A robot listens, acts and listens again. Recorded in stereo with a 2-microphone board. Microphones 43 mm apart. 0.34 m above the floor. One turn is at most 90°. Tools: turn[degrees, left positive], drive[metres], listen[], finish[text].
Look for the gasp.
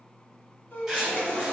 Thought: The gasp: about 55° left or 125° left.
Action: turn[55]
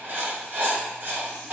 Action: listen[]
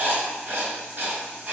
Action: finish[I heard a gasp, but can't make it out now. It was about straight ahead or 70° left.]